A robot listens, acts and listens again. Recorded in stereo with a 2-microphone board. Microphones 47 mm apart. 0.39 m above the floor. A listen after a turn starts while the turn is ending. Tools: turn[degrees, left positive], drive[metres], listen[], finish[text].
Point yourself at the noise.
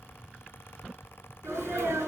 Action: turn[-90]
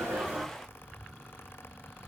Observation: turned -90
Action: finish[I heard a sneeze from this way, but can't make it out now.]